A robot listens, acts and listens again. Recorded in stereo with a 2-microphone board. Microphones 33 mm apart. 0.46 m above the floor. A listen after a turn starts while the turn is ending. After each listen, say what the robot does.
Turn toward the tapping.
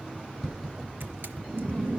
Turn 30° left.
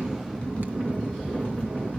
Keep listening.
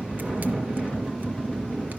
Keep listening.
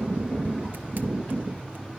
I heard tapping, but can't make it out now. It was about 30° right or 150° left.